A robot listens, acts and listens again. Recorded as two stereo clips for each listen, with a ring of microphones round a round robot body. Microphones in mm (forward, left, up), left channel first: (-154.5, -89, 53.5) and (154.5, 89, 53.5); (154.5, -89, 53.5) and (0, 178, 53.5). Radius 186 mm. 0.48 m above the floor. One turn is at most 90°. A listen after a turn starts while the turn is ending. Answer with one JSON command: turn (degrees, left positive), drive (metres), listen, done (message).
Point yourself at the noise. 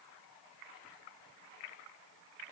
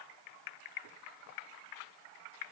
{"listen": true}
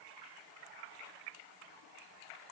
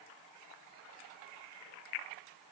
{"listen": true}
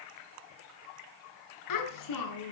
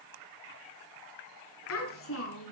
{"turn": -90}
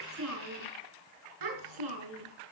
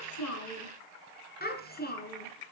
{"done": "Facing the child speaking."}